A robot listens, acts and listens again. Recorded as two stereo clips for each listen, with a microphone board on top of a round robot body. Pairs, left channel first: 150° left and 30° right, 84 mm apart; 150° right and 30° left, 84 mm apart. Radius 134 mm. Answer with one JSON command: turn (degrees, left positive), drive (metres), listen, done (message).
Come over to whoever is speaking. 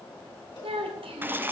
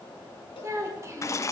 {"turn": -30}
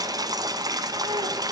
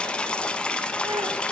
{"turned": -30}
{"listen": true}
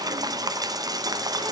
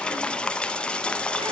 {"listen": true}
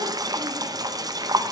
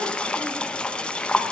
{"done": "Facing where the child speaking came from. I can't hear it now. I did not reach it."}